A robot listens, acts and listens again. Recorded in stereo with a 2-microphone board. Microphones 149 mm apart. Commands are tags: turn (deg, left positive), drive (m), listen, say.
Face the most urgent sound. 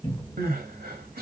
<turn deg="-90"/>
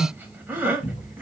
<turn deg="-10"/>
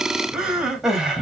<say>Found it: crying, straight ahead.</say>